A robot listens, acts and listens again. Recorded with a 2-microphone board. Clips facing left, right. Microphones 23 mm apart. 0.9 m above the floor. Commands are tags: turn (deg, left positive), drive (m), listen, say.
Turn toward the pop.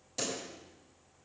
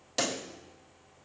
<turn deg="-45"/>
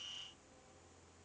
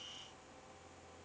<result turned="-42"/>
<listen/>
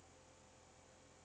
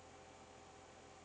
<say>I heard a pop, but can't make it out now. It was about straight ahead or 95° right.</say>